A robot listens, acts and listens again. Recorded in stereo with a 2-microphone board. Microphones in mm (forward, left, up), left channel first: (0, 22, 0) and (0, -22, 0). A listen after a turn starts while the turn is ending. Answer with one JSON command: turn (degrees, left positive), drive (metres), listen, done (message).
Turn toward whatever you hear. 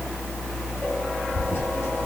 {"turn": 65}
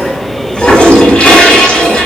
{"turn": 30}
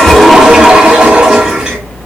{"turn": -20}
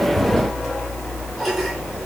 {"listen": true}
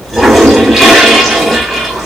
{"done": "Facing the toilet flushing."}